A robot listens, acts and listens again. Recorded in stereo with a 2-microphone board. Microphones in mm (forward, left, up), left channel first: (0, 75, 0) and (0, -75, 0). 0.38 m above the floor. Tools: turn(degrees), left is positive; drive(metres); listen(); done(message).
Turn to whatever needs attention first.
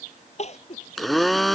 turn(degrees=50)
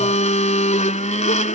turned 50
listen()
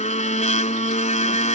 listen()
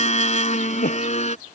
turn(degrees=80)
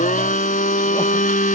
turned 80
listen()
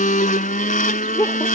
turn(degrees=20)
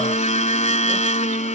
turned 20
listen()
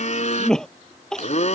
done("Facing the crying.")